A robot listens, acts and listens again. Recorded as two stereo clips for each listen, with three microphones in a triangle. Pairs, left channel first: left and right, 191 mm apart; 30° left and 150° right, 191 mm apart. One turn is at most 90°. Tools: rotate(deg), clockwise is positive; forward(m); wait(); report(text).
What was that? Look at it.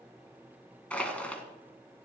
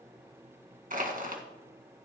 rotate(-90)
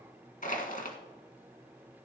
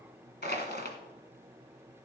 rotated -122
rotate(-50)
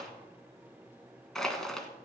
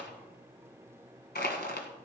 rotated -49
report("Facing the crushing, 1 to 2 m away.")